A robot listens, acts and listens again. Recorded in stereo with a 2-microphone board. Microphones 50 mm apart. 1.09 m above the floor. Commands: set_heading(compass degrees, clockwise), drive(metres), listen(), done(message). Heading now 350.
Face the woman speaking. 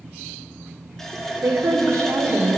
set_heading(55)
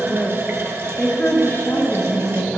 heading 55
set_heading(0)
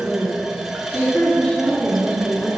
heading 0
set_heading(335)
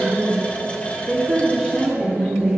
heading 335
set_heading(345)
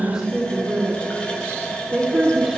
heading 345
done("Found it: a woman speaking, straight ahead.")